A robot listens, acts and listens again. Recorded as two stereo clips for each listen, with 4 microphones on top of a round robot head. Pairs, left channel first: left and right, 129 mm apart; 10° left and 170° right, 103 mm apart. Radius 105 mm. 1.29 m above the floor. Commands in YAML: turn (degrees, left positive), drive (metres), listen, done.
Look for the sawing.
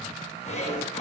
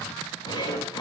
turn: 55
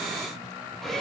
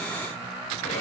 done: "Facing the sawing."